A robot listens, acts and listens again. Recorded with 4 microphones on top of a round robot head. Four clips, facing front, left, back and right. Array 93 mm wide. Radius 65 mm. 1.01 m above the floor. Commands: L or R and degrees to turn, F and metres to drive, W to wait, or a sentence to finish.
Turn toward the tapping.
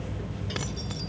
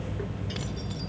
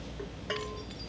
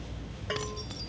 W
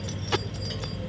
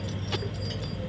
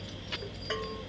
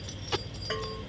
W
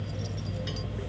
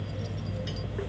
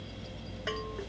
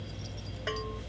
I can't make out tapping to turn to.